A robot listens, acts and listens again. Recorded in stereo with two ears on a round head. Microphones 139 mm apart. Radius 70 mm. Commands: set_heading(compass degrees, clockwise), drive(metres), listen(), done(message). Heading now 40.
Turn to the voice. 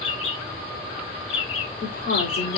set_heading(310)
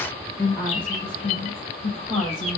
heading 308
set_heading(293)
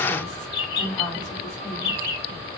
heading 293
set_heading(283)
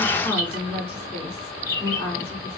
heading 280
done("Found it: a woman speaking, straight ahead, 2 to 4 m away.")